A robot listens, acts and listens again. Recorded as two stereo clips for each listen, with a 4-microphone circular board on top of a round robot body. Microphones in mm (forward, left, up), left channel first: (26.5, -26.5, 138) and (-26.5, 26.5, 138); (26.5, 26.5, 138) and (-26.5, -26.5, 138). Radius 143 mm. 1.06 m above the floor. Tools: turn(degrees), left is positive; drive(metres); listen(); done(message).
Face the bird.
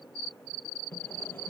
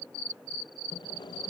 listen()
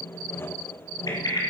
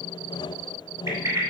turn(degrees=-85)
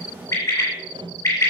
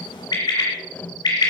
turn(degrees=10)
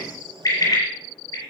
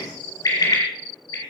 done("Facing the bird.")